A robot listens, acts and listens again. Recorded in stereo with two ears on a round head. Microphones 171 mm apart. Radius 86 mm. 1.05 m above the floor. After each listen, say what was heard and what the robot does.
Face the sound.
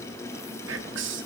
The whispering: about 65° right or 115° right. Turn 65° right.
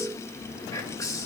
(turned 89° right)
So it is at 15° left. Turn 15° left.
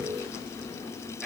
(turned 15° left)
Facing the whispering, 1 to 2 m away.